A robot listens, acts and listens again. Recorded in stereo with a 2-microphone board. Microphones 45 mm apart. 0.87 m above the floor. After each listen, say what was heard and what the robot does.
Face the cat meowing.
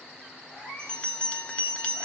The cat meowing: about 20° right or 160° right. Turn 20° right.
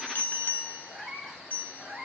Turn 30° right.
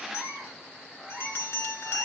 So it is at 10° left. Turn 10° left.
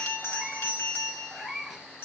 Facing the cat meowing.